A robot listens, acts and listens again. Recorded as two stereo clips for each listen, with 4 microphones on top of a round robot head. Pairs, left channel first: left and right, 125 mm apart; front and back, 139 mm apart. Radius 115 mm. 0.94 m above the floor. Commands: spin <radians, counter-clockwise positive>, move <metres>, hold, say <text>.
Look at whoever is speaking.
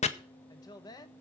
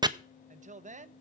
spin 2.62
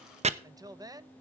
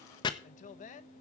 spin -0.52
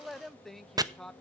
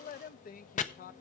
say Found it: a woman speaking, straight ahead, under 1 m away.